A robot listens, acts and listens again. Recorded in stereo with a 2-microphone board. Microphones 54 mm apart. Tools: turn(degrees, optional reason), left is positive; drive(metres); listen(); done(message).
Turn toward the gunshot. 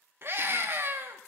listen()
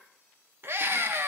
listen()
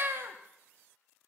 done("I can't make out a gunshot, only a scream.")